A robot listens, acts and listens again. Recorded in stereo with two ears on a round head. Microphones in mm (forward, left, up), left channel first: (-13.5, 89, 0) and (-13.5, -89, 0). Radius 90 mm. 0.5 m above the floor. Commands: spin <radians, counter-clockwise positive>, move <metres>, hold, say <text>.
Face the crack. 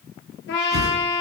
hold
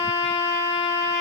hold
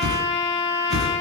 say I can't make out a crack to turn to.